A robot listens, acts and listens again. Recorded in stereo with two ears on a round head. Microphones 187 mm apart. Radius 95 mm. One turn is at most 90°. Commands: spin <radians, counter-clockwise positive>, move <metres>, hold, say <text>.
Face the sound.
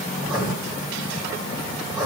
spin 0.52
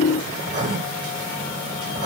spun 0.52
spin -0.44
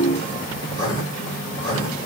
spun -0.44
spin 0.35
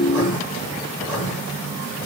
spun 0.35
say Facing the writing.